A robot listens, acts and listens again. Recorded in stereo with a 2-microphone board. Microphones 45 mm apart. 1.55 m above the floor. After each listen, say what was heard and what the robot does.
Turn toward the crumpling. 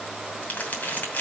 The crumpling: about 35° left or 145° left. Turn 35° left.
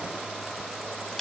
Keep listening.
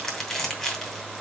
So it is at 10° left. Turn 10° left.
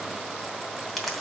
Facing the crumpling.